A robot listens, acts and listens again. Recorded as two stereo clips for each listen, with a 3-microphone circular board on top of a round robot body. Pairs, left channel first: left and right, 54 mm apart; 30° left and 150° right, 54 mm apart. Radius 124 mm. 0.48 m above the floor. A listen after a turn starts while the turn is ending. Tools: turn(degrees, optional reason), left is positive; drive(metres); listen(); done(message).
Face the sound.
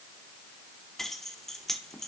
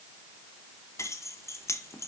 done("Facing the keys jangling, under 1 m away.")